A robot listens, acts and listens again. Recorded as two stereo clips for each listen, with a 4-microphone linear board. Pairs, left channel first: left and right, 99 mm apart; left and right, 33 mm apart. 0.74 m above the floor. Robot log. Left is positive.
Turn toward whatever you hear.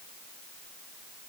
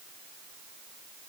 cmd idle
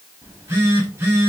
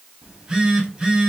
note: The phone buzzing: about 25° right or 155° right.
cmd yaw -25
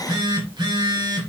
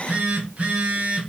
note: So it is at 125° right.
cmd yaw -125
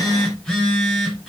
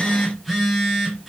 end: Found it: a phone buzzing, straight ahead, 1 to 2 m away.